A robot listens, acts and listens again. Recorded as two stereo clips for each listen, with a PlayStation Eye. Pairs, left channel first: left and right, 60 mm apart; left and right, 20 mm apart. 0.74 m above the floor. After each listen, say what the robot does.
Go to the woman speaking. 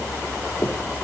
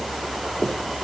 Keep listening.
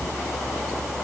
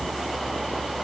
Keep listening.
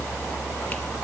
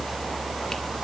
I can't make out a woman speaking.